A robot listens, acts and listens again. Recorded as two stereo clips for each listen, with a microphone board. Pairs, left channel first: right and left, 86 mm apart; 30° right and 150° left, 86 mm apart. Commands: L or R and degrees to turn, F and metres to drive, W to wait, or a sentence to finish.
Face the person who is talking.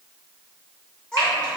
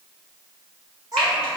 R170
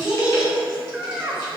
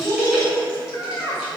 L10
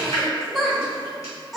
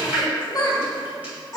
Facing the child speaking.